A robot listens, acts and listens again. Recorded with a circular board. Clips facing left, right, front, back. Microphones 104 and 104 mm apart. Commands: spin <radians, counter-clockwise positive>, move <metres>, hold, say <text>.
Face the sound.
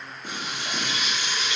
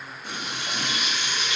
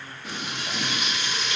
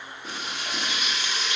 spin 2.18
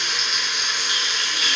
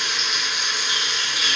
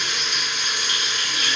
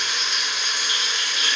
say Facing the frying, 1 to 2 m away.